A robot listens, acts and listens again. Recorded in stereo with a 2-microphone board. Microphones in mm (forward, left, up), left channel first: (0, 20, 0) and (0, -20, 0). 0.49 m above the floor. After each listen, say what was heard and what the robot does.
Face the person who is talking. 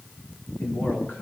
The man speaking: about 60° left or 120° left. Turn 60° left.
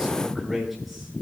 Facing the man speaking, over 4 m away.